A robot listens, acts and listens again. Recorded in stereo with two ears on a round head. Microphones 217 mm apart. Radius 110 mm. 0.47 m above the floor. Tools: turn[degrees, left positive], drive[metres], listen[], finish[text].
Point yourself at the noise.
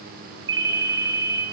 Thought: The ringtone: about 15° right or 165° right.
Action: turn[-15]
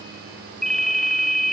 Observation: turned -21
Action: finish[Facing the ringtone, 1 to 2 m away.]